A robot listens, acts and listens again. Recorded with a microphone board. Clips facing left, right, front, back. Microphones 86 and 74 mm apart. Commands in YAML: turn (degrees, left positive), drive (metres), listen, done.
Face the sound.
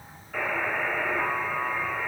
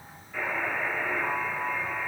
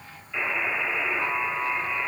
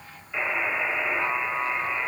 turn: 110
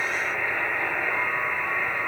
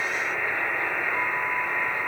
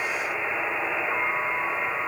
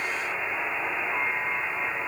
done: "Facing the buzzer, 2 to 4 m away."